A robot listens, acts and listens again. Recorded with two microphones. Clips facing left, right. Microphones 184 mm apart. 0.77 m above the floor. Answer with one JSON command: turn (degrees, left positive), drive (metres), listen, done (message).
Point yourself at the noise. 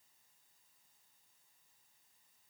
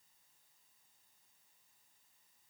{"listen": true}
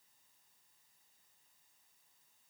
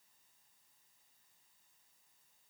{"listen": true}
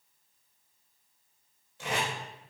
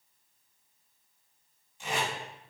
{"turn": 70}
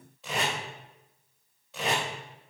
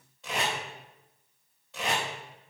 {"done": "Facing the tape being pulled, 2 to 4 m away."}